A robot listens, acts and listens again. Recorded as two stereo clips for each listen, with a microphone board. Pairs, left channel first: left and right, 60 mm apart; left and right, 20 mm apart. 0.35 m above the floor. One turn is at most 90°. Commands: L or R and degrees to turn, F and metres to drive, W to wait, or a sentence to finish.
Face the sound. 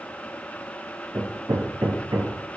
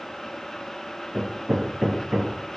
R90
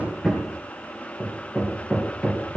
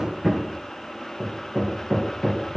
Facing the hammering, 2 to 4 m away.